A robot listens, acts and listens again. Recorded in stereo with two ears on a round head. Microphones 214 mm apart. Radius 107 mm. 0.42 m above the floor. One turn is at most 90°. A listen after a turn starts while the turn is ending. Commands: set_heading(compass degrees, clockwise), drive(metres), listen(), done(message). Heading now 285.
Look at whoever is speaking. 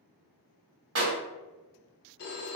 listen()
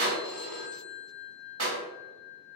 listen()
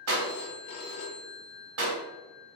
done("I can't make out anyone speaking to turn to.")